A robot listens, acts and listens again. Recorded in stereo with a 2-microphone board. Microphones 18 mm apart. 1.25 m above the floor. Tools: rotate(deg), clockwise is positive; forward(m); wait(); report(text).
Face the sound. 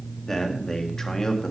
rotate(-35)
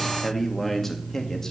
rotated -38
rotate(-25)
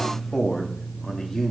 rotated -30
rotate(-25)
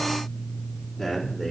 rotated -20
rotate(-20)
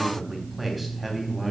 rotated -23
report("Found it: a man speaking, straight ahead.")